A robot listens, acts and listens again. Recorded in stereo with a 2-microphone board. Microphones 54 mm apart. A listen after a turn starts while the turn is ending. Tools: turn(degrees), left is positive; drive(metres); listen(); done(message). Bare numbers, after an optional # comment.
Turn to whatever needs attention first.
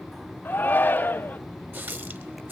# The shout: about 35° left or 145° left.
turn(35)
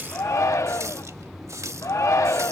# So it is at 110° left.
turn(110)
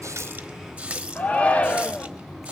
# The shout is now 25° left.
turn(25)
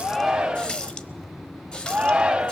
# The shout is now 20° right.
turn(-20)
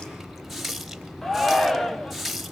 done("Found it: a shout, straight ahead.")